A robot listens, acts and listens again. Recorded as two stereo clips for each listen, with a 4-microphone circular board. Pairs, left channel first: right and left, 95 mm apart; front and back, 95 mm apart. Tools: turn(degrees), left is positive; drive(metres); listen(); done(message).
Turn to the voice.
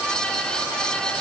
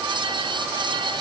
listen()
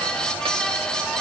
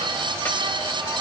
listen()
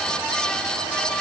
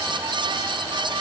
done("I can't make out anyone speaking to turn to.")